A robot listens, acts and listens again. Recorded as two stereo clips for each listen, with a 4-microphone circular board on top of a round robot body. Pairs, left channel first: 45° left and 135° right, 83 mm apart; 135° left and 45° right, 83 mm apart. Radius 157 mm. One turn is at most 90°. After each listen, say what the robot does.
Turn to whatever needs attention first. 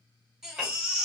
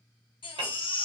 Turn 90° left.
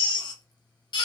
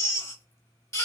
Turn 75° left.
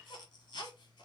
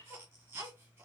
Turn 15° left.
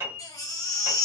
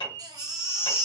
Found it: a baby crying, straight ahead.